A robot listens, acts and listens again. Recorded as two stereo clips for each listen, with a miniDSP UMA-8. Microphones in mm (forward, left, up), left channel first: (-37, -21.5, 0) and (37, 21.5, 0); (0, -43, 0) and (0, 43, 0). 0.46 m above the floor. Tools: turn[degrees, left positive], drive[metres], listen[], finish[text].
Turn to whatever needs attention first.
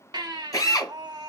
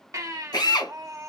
Thought: The baby crying: 45° left.
Action: turn[45]
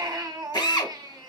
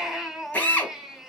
Action: finish[Found it: a baby crying, straight ahead.]